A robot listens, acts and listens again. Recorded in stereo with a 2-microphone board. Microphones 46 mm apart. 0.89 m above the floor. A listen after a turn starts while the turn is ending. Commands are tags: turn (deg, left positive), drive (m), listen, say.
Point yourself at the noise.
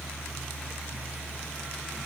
<listen/>
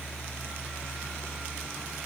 <listen/>
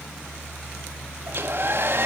<turn deg="-50"/>
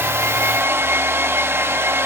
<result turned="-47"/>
<turn deg="-70"/>
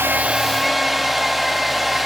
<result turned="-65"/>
<say>Facing the hair dryer.</say>